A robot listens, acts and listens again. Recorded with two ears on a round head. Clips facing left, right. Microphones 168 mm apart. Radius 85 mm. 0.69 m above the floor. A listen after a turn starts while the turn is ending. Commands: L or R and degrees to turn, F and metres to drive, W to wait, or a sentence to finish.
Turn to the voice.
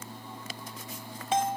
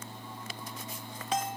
W
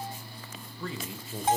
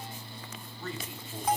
L65
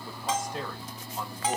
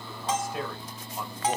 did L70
Found it: a man speaking, straight ahead, 2 to 4 m away.